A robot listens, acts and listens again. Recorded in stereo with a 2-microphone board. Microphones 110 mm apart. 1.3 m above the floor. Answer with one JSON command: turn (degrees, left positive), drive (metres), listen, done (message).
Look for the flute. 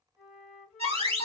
{"turn": -30}
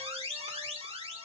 {"listen": true}
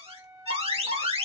{"turn": -140}
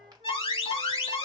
{"listen": true}
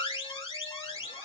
{"listen": true}
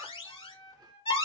{"turn": -10}
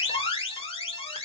{"listen": true}
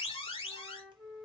{"done": "Facing the flute, 2 to 4 m away."}